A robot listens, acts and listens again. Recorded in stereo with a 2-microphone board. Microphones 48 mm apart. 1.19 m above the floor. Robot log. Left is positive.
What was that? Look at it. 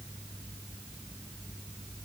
cmd idle
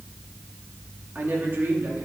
note: The woman speaking: about 50° right or 130° right.
cmd yaw -50
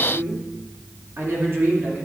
note: So it is at 50° right.
cmd yaw -50
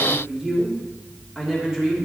note: The woman speaking is now 10° right.
cmd yaw -10
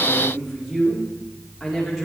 end: Found it: a woman speaking, straight ahead.